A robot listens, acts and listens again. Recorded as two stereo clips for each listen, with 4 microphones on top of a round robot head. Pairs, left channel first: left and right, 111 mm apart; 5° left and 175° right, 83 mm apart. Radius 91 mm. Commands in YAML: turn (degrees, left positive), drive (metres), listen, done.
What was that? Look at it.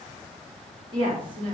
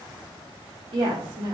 turn: -145
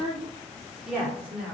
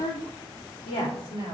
turn: -10
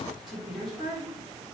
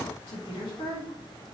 done: "Found it: a woman speaking, straight ahead, over 4 m away."